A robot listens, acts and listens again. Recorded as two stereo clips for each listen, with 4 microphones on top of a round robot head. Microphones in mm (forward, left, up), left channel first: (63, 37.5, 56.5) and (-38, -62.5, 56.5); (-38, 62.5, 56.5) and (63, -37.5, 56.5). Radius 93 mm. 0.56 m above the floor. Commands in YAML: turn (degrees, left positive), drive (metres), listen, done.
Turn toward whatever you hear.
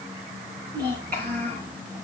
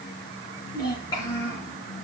turn: -160
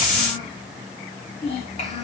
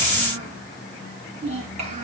done: "Found it: a child speaking, straight ahead."